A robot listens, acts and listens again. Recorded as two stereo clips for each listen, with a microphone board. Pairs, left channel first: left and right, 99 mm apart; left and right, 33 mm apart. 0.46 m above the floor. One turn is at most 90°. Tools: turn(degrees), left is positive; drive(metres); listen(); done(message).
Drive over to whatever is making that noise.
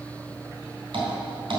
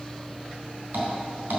turn(degrees=-60)
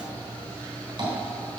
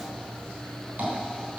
turn(degrees=-60)
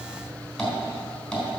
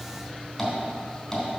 drive(metres=1.0)
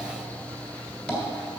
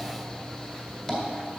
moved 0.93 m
drive(metres=1.0)
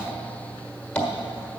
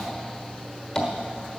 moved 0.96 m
turn(degrees=15)
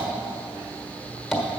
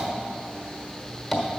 drive(metres=1.0)
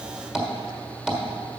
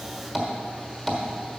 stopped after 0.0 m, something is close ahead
done("I am next to the tapping.")